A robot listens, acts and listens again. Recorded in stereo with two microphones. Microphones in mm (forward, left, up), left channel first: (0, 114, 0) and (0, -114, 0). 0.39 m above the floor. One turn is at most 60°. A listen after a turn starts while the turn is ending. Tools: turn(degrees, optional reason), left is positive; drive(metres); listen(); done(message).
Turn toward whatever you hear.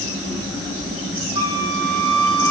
turn(degrees=60, reason="The flute: about 65° left or 115° left.")
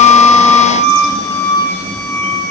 turn(degrees=10, reason="So it is at 10° left.")
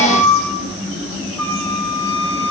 done("Found it: a flute, straight ahead.")